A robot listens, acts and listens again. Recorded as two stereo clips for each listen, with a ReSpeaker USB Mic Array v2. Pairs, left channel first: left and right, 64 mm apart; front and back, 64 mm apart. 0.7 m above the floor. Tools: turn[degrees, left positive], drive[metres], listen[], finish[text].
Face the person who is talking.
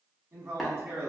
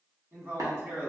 Thought: The man speaking: 135° right.
Action: turn[-135]
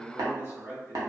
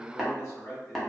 Thought: The man speaking is now 45° right.
Action: turn[-45]
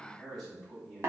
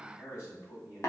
Action: finish[Facing the man speaking.]